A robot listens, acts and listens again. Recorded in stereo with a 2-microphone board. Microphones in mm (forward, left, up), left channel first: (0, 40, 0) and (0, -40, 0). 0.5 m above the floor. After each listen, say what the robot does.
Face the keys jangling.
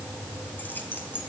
Turn 25° left.
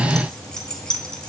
Turn 30° left.
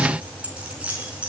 Turn 15° right.
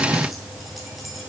Keep listening.
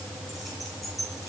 Facing the keys jangling, over 4 m away.